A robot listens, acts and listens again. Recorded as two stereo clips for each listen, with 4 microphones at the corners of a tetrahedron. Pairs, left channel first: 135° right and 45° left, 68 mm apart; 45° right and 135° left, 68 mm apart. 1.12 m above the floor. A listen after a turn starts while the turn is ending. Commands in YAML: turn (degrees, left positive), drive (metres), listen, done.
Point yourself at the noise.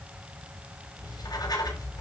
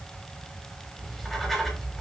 turn: -135
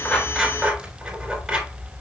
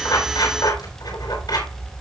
turn: -35
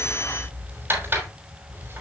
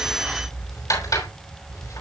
turn: -15
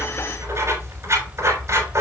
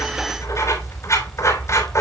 done: "Found it: writing, straight ahead."